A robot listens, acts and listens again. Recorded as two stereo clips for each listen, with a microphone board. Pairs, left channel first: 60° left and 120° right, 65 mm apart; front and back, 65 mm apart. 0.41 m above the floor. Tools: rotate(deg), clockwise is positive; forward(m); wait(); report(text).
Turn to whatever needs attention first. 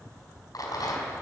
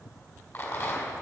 wait()
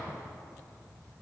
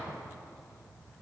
wait()
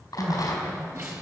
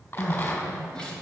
rotate(75)
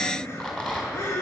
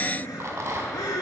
rotate(-10)
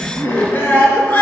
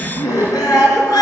report("Facing the crying.")